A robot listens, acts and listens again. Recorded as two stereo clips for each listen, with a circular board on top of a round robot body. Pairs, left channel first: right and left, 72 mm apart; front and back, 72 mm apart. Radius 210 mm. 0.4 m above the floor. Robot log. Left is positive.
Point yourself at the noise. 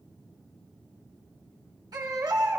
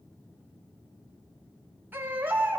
note: The baby crying: 115° left.
cmd yaw +115
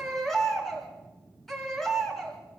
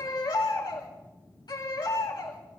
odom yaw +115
end: Found it: a baby crying, straight ahead, over 4 m away.